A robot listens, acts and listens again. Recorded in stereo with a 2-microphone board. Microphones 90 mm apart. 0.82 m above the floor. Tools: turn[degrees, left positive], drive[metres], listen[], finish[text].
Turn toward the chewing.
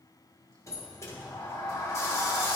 Action: listen[]
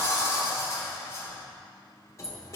Action: listen[]
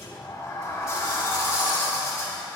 Action: finish[I can't make out chewing to turn to.]